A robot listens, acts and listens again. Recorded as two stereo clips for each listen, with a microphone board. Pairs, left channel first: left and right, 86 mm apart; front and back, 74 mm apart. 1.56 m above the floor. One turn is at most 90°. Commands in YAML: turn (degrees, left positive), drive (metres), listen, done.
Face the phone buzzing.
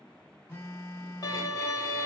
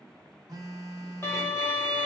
turn: 90
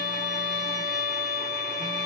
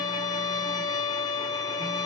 turn: 65
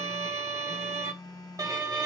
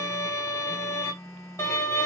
turn: 55
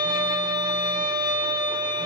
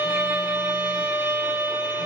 listen: true
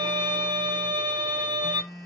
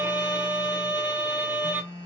done: "Facing the phone buzzing."